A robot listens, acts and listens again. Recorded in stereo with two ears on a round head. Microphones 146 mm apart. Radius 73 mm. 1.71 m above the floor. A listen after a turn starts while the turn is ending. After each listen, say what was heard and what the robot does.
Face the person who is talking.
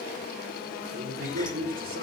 The man speaking: about 60° right or 120° right. Turn 60° right.
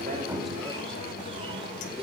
Keep listening.
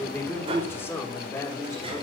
So it is at 20° left. Turn 20° left.
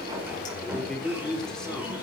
Found it: a man speaking, straight ahead.